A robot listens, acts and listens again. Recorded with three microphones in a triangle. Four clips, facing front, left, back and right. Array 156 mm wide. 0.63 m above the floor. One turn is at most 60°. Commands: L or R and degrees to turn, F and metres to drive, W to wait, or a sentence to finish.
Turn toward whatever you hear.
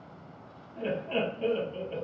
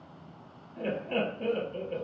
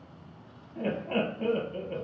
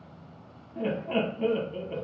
R60
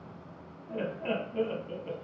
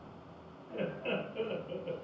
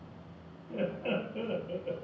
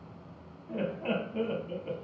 R55
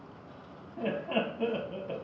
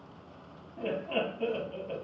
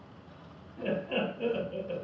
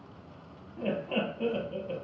Found it: laughter, straight ahead, under 1 m away.